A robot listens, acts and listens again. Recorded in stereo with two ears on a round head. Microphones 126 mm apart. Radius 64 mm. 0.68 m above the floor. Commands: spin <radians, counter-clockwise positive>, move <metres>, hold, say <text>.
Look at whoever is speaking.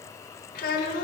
spin 1.13
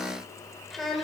say Facing the child speaking, 1 to 2 m away.